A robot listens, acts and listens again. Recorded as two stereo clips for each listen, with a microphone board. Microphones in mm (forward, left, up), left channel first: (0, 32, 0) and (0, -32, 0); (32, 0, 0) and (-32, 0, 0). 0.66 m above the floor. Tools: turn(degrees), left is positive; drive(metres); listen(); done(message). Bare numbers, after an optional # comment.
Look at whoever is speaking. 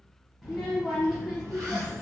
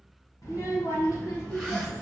done("Facing the child speaking.")